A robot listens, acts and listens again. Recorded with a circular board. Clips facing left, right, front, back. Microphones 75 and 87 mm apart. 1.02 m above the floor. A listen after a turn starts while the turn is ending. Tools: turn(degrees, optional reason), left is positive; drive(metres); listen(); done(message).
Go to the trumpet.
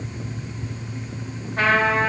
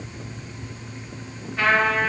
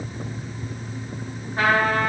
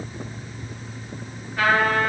turn(degrees=55, reason="The trumpet: 55° left.")
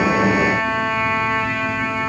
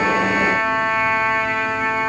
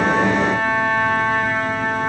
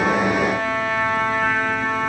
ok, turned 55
drive(metres=1.0)
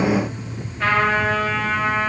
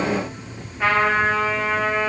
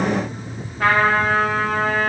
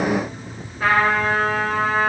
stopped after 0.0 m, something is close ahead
turn(degrees=-10, reason="The trumpet is now 10° right.")
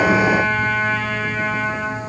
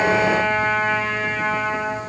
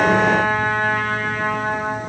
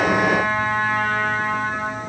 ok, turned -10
done("Something is in my way. I am facing the trumpet but have not reached it.")